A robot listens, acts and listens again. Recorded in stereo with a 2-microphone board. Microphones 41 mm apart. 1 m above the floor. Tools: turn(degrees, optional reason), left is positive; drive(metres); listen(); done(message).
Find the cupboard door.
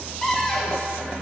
turn(degrees=30)
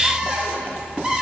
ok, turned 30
turn(degrees=-15, reason="So it is at 15° right.")
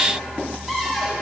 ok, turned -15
done("Found it: a cupboard door, straight ahead.")